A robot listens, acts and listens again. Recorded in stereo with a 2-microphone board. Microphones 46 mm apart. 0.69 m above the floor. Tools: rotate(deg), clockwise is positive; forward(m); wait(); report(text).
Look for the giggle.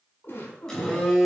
rotate(-50)
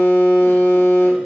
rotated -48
wait()
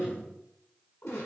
rotate(-80)
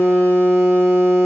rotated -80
wait()
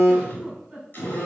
report("Facing the giggle.")